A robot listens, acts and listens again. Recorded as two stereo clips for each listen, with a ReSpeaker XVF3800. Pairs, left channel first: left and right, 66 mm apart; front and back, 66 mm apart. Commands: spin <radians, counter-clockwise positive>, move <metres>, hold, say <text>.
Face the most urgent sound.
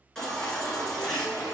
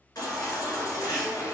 spin 0.17
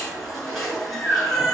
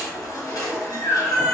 say Found it: a baby crying, straight ahead, 1 to 2 m away.